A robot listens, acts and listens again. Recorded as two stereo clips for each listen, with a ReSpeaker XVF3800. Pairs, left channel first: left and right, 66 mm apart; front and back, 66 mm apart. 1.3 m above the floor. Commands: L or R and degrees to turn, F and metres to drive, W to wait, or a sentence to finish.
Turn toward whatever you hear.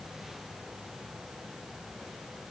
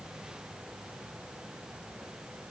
W
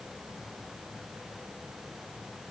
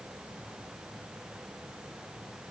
W
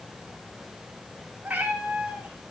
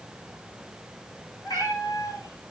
R15
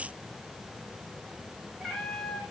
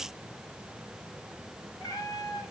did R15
L10
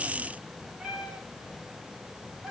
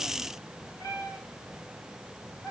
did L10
Facing the cat meowing, 2 to 4 m away.